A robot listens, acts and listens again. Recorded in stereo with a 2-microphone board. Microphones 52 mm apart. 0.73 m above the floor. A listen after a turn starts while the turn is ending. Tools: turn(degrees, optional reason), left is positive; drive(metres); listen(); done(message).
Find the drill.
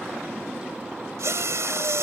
turn(degrees=-70, reason="The drill: about 70° right or 110° right.")
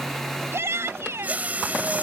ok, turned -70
turn(degrees=-35, reason="So it is at 35° right.")
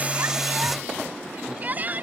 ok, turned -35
listen()
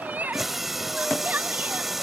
done("Facing the drill.")